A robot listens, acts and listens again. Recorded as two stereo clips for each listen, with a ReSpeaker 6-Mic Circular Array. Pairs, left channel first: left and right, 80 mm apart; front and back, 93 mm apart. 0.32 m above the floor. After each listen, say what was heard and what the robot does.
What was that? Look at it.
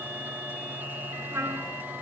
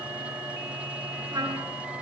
The trumpet: 140° right. Turn 140° right.
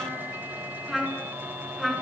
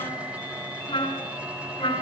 Facing the trumpet, over 4 m away.